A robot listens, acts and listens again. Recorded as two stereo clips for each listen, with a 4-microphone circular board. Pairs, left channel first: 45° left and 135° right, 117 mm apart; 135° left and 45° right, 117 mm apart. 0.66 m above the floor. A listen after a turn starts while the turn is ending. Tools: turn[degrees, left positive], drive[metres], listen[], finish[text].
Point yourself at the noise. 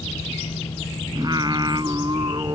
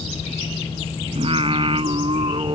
Thought: The singing: 85° right.
Action: turn[-85]
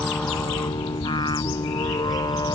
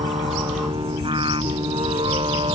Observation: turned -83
Action: finish[Found it: singing, straight ahead.]